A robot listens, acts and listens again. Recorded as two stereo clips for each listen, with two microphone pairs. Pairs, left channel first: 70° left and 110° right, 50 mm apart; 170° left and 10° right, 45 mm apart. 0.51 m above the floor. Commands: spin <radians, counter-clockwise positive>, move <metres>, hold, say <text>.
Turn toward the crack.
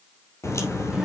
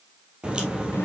spin 1.05
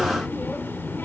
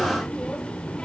say Facing where the crack came from. I can't hear it now.